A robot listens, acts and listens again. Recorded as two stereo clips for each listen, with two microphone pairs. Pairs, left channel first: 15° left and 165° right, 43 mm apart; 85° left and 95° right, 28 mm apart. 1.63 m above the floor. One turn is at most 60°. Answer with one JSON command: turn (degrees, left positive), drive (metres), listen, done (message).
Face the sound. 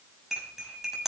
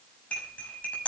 {"turn": 60}
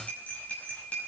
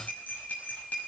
{"turn": 60}
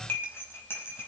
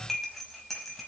{"done": "Found it: cutlery clinking, straight ahead."}